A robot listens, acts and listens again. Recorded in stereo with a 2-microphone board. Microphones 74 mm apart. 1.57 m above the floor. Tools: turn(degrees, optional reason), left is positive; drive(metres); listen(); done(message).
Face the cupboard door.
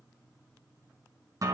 listen()
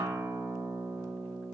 listen()
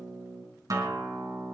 done("I can't make out a cupboard door, only a guitar.")